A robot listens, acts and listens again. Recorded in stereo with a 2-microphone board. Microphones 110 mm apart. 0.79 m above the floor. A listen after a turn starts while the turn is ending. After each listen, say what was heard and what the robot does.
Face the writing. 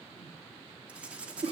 Turn 30° right.
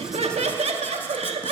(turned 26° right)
Keep listening.
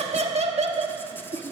Keep listening.
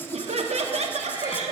I heard writing, but can't make it out now. It was about 15° left or 145° right.